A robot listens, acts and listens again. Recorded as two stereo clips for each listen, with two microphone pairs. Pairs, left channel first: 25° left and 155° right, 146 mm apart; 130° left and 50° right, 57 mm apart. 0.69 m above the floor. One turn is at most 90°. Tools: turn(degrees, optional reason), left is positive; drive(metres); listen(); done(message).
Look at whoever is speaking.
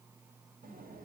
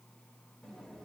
listen()
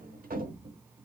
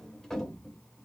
listen()
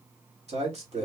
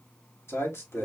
turn(degrees=90, reason="The man speaking: 165° left.")
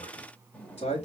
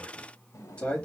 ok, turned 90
turn(degrees=65, reason="The man speaking is now 65° left.")
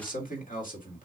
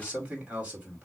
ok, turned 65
turn(degrees=20, reason="The man speaking is now 20° left.")
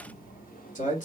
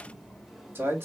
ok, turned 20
done("Facing the man speaking.")